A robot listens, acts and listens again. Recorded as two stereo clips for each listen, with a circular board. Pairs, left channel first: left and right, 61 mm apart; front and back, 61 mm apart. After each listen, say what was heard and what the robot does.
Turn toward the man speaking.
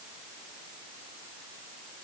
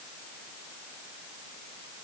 Keep listening.
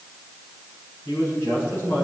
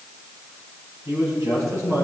The man speaking: 140° left. Turn 140° left.
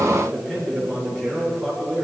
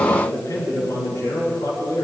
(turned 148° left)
Facing the man speaking, over 4 m away.